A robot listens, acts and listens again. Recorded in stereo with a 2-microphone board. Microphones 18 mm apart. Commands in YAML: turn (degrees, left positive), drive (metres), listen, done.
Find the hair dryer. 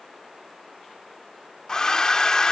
turn: 30
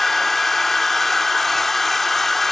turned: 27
done: "Facing the hair dryer."